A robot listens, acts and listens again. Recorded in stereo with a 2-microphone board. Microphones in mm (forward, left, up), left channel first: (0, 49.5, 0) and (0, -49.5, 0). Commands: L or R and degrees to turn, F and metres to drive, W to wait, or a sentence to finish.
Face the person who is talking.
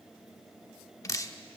W
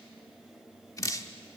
W
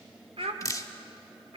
R90
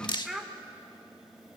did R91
Facing the child speaking.